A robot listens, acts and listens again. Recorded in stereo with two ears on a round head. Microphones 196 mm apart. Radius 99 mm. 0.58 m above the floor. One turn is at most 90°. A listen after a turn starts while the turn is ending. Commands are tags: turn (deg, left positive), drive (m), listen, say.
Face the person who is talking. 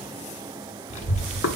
<turn deg="35"/>
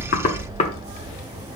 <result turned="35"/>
<turn deg="90"/>
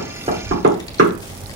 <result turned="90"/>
<turn deg="20"/>
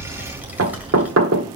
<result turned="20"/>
<say>Found it: a child speaking, straight ahead, 1 to 2 m away.</say>